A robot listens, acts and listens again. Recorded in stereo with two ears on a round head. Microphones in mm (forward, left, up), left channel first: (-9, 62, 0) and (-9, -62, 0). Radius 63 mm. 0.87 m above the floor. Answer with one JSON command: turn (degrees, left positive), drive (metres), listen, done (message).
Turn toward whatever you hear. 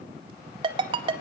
{"turn": -35}
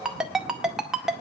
{"done": "Found it: a ringtone, straight ahead."}